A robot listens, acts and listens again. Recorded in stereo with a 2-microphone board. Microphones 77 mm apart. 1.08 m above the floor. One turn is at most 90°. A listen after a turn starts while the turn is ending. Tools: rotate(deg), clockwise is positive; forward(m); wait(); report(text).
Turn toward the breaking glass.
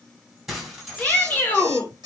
rotate(30)
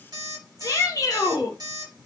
wait()
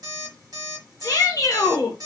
report("I heard breaking glass, but can't make it out now. It was about 25° left or 145° right.")